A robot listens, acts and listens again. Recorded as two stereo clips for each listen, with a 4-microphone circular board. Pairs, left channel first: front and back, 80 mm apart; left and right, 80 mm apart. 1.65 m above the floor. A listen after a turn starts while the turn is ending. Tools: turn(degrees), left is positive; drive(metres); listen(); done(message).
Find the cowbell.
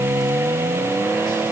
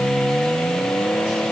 listen()
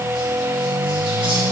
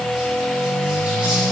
listen()
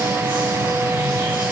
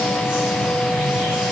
done("I can't make out a cowbell.")